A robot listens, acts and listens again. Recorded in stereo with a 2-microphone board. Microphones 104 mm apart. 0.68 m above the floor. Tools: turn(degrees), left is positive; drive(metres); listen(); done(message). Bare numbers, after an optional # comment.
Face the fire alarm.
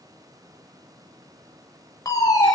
# The fire alarm: about 35° left or 145° left.
turn(35)
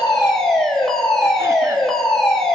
done("Found it: a fire alarm, straight ahead.")